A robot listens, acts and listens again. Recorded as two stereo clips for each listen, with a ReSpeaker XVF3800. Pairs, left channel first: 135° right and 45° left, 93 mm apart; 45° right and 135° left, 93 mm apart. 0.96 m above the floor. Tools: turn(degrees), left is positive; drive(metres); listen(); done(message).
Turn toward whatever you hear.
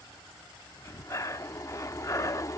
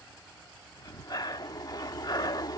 turn(degrees=-85)
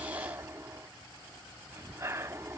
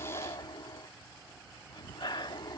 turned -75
turn(degrees=-10)
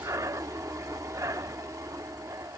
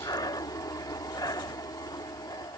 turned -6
done("Facing the breathing.")